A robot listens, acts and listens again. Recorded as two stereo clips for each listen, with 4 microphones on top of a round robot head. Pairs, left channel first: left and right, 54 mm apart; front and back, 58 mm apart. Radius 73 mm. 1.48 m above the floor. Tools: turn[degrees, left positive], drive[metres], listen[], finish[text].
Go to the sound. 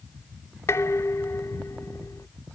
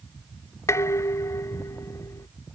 Thought: The dishes clattering: 35° left.
Action: turn[35]
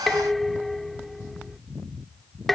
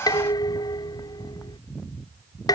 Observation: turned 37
Action: drive[1.0]
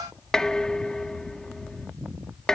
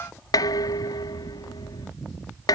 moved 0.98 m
Action: drive[1.0]
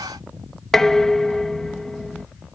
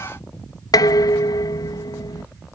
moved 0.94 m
Action: drive[1.0]
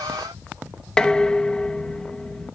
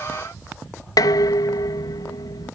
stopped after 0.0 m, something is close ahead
Thought: The dishes clattering is now 10° left.
Action: turn[10]
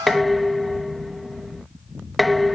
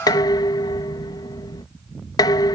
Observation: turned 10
Action: finish[I am next to the dishes clattering.]